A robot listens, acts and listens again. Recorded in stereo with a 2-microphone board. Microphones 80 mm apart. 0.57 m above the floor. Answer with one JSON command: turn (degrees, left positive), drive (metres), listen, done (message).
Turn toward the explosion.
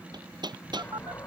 {"turn": 35}
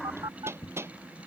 {"done": "Facing the explosion."}